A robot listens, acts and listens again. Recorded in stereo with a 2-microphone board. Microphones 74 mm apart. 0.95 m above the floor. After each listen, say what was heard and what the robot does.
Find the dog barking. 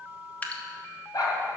The dog barking: about 60° left or 120° left. Turn 60° left.
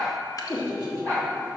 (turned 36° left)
So it is at 20° left. Turn 20° left.
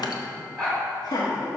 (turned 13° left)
Found it: a dog barking, straight ahead.